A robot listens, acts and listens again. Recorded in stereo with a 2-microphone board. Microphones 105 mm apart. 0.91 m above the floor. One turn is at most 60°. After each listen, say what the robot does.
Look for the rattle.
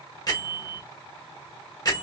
Keep listening.
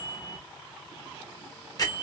Keep listening.
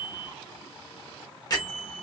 I can't make out a rattle, only a bell.